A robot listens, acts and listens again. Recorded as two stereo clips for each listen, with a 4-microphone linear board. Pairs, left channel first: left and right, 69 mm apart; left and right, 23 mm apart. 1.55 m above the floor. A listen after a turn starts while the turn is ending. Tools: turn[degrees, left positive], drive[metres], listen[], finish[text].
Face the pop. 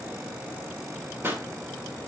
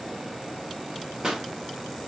Thought: The pop: about 30° right or 150° right.
Action: turn[-30]
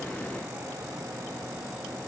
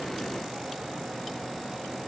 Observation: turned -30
Action: listen[]
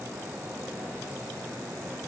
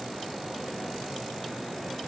Action: finish[I heard a pop, but can't make it out now. It was about straight ahead or 120° right.]